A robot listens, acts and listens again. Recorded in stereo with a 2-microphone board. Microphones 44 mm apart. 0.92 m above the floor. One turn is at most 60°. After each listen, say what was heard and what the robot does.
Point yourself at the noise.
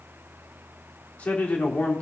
The man speaking: about 30° left or 150° left. Turn 30° left.
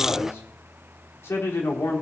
So it is at 120° left. Turn 60° left.
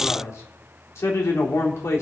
The man speaking is now 80° left. Turn 60° left.
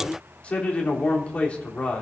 The man speaking is now 25° left. Turn 25° left.
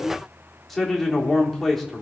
Found it: a man speaking, straight ahead, 2 to 4 m away.